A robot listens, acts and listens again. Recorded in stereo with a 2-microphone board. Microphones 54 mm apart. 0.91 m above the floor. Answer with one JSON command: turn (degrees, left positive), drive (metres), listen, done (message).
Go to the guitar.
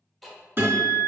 {"turn": -45}
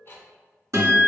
{"turn": -85}
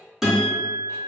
{"drive": 1.0}
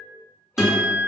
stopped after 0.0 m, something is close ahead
{"turn": -10}
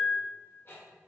{"done": "Something is in my way. I am facing the guitar but have not reached it."}